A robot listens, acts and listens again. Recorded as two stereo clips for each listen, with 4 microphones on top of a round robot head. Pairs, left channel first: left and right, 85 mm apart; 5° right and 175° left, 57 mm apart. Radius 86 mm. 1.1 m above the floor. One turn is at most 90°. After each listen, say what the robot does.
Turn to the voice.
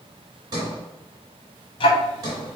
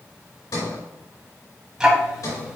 Keep listening.
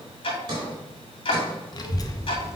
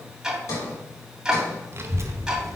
Turn 90° left.
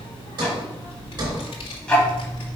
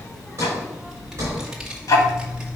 Turn 90° left.
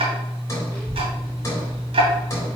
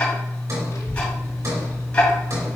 Turn 10° left.
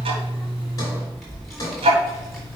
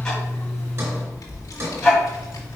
Facing the child speaking.